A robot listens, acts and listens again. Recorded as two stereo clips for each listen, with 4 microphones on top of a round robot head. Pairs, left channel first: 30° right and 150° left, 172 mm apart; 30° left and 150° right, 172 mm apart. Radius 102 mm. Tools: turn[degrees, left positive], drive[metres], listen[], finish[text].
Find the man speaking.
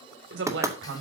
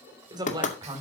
Thought: The man speaking: 145° left.
Action: turn[145]
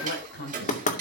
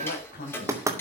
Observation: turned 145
Action: finish[Found it: a man speaking, straight ahead.]